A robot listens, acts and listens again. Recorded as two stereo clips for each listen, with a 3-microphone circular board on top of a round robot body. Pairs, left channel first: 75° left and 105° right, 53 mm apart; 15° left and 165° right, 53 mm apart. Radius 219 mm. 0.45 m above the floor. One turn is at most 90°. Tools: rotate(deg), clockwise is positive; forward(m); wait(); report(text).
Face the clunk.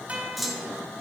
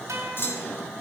rotate(15)
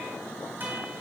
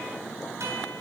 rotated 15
report("Facing where the clunk came from. I can't hear it now.")